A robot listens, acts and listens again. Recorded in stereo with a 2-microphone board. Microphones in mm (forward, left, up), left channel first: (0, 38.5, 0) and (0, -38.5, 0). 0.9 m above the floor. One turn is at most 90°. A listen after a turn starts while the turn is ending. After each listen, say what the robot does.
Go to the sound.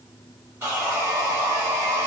Turn 35° right.
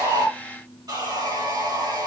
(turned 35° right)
Turn 90° right.
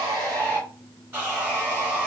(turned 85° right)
Turn 25° right.
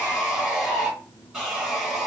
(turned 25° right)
Drive 1.0 m forward.
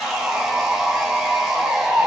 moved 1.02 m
Turn 10° right.
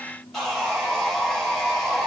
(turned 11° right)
Drive 1.0 m forward.
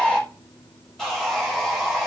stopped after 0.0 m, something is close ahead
Arrived at the sawing, straight ahead.